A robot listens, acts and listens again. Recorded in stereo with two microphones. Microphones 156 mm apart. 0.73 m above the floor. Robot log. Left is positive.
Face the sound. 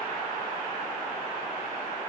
cmd idle
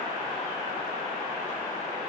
cmd idle
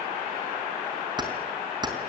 note: The keys jangling: about 30° right or 150° right.
cmd yaw -30
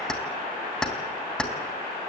end: Found it: keys jangling, straight ahead.